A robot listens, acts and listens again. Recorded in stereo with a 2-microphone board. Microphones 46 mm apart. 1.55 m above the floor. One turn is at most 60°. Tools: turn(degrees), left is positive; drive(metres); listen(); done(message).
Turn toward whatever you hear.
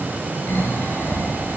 turn(degrees=45)
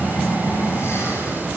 turn(degrees=60)
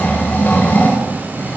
turn(degrees=45)
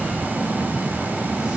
turn(degrees=-10)
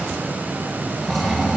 done("Facing the snoring.")